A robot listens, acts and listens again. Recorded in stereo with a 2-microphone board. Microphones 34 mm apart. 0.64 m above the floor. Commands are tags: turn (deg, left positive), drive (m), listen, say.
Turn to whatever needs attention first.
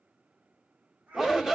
<turn deg="-30"/>
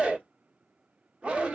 <turn deg="-140"/>
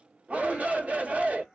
<turn deg="-50"/>
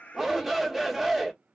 <say>Found it: a shout, straight ahead, 1 to 2 m away.</say>